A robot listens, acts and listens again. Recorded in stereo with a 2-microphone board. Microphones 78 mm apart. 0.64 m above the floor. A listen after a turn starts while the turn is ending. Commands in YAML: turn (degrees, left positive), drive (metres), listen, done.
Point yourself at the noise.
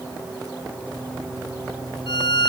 turn: 70
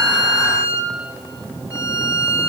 turn: 40
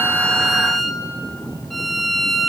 done: "Facing the violin."